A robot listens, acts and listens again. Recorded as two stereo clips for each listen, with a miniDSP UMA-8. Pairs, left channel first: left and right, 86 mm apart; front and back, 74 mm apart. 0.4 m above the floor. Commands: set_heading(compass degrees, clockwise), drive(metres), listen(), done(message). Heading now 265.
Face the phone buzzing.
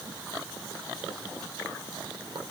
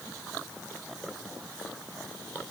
listen()
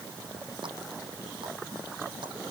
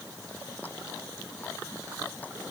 listen()
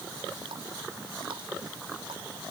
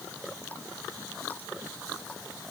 done("I can't make out a phone buzzing.")